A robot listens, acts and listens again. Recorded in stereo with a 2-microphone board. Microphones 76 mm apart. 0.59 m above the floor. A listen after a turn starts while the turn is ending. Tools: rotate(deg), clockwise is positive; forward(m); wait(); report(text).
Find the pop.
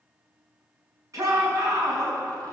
wait()
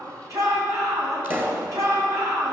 rotate(30)
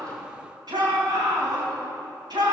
wait()
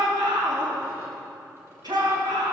report("I heard a pop, but can't make it out now. It was about straight ahead or 120° right.")